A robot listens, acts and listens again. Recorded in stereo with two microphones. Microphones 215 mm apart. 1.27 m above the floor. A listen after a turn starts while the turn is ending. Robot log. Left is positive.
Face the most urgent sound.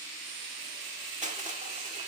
cmd idle
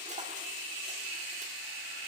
cmd idle
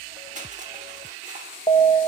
note: The alarm: about 25° left or 155° left.
cmd yaw +25
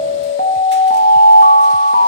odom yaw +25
note: So it is at 135° left.
cmd yaw +135
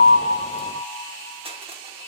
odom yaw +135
cmd idle
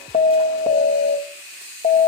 note: The alarm is now 40° left.
cmd yaw +40
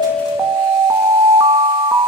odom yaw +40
note: The alarm is now 10° right.
cmd yaw -10
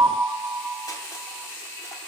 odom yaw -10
end: Found it: an alarm, straight ahead, 1 to 2 m away.